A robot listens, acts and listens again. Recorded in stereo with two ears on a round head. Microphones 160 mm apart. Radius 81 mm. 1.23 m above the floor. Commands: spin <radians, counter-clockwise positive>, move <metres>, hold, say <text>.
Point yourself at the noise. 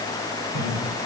spin -1.31
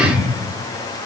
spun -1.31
say Facing the laughter, over 4 m away.